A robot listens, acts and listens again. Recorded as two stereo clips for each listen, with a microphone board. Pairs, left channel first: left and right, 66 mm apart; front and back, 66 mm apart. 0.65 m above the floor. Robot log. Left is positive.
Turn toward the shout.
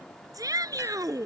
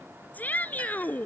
note: The shout: 65° right.
cmd yaw -65
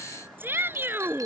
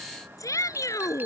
note: The shout is now 35° right.
cmd yaw -35
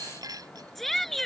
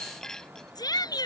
end: Found it: a shout, straight ahead.